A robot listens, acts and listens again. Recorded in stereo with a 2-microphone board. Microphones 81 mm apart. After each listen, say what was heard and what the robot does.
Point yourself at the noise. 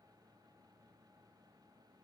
Keep listening.
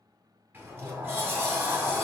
The sliding door: about 25° right or 155° right. Turn 25° right.
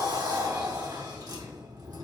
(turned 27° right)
So it is at 125° right. Turn 125° right.
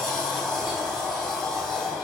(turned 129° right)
Facing the sliding door, 1 to 2 m away.